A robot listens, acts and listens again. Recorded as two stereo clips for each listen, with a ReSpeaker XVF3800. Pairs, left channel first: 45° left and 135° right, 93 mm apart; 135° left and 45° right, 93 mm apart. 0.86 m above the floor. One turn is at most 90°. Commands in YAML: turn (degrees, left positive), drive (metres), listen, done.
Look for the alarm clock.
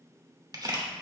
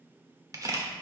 listen: true
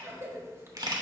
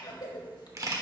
listen: true
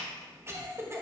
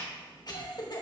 done: "I can't make out an alarm clock, only a camera shutter and a cough."